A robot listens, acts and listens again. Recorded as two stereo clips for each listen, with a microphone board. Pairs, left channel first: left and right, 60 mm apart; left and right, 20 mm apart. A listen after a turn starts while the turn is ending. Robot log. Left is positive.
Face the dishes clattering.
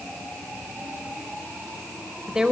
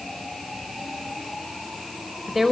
cmd idle
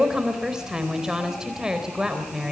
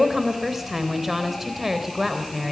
cmd idle
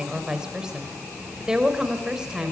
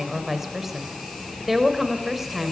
end: I can't make out dishes clattering, only a woman speaking.